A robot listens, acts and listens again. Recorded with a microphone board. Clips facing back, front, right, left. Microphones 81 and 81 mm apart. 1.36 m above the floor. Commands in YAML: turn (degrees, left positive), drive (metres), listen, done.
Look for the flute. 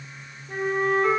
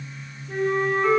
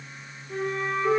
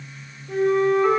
turn: 95
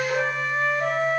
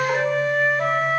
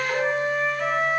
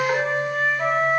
turn: 20
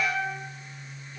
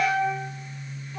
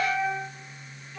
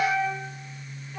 done: "Facing the flute, 2 to 4 m away."